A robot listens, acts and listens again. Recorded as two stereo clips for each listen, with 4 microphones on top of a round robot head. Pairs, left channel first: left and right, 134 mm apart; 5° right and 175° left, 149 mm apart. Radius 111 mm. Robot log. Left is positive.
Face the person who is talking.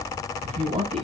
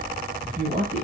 note: The man speaking: 125° right.
cmd yaw -125
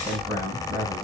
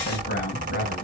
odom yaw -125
note: The man speaking is now 15° right.
cmd yaw -15
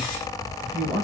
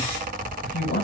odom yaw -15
end: Facing the man speaking.